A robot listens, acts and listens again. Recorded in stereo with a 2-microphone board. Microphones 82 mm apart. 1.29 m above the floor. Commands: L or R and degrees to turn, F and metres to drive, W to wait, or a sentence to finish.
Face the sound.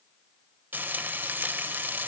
R25
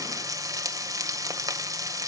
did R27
R125
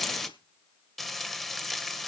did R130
Found it: frying, straight ahead, 1 to 2 m away.